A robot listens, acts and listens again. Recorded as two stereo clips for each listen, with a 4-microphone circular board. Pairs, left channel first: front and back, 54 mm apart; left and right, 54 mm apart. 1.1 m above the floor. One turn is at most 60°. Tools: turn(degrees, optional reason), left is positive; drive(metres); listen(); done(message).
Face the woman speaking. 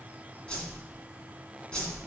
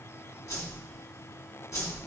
listen()
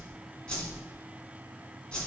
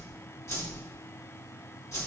listen()
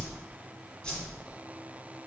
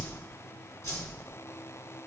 done("I can't make out a woman speaking to turn to.")